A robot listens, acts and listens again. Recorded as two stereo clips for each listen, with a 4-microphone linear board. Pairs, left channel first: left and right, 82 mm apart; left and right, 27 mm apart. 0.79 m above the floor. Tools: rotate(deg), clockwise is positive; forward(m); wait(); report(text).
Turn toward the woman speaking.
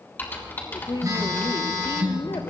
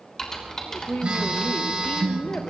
rotate(-70)
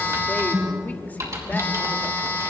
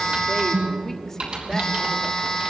wait()
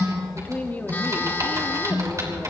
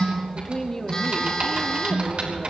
rotate(-20)
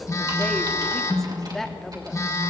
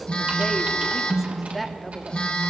report("Facing the woman speaking.")